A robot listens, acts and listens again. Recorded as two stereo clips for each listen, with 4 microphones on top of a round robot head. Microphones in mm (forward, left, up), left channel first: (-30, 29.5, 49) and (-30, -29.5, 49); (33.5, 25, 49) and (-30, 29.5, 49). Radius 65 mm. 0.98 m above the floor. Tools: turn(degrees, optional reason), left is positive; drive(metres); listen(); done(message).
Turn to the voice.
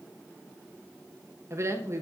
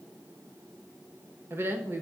turn(degrees=-130, reason="The woman speaking: 130° right.")
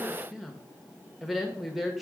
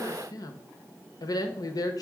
done("Facing the woman speaking.")